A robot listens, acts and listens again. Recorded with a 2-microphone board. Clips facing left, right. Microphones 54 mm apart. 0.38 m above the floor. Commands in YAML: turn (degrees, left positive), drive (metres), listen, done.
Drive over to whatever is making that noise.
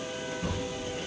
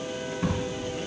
turn: -90
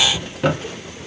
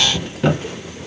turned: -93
turn: 15
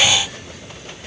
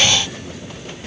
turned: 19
listen: true
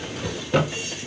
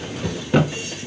drive: 1.0
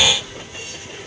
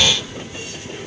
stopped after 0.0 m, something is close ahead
listen: true
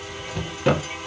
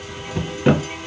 turn: -10
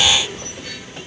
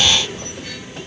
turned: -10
listen: true
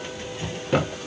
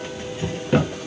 done: "Blocked. The drawer is further on, straight ahead."